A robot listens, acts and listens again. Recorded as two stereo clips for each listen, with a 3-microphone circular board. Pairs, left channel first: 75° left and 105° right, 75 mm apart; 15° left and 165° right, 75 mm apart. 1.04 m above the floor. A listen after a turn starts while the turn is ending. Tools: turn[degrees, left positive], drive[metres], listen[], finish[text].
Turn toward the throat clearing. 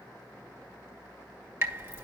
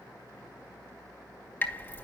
Action: listen[]
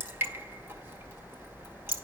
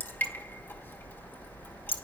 Action: listen[]
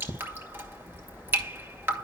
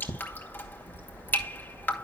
Action: finish[I can't make out throat clearing, only dripping.]